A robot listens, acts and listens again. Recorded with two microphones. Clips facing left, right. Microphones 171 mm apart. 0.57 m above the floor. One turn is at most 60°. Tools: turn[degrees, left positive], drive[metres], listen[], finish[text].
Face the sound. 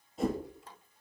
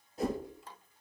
Action: turn[30]
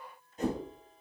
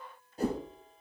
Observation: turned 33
Thought: So it is at 35° right.
Action: turn[-35]
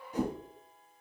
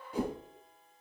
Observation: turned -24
Thought: The whoosh is now 15° right.
Action: turn[-15]
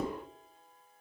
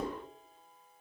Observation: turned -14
Action: finish[Facing the whoosh.]